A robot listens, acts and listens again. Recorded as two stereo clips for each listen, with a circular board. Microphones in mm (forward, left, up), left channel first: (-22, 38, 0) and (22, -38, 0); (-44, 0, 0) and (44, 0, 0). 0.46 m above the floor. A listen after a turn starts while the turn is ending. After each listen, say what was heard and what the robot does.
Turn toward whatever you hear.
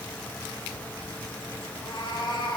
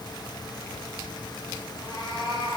The cat meowing: 155° left. Turn 155° left.
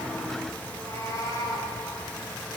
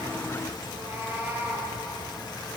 The cat meowing is now 70° left. Turn 70° left.
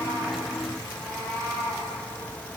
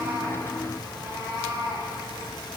The cat meowing is now 40° left. Turn 40° left.
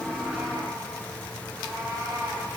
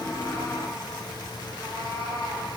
Found it: a cat meowing, straight ahead, 2 to 4 m away.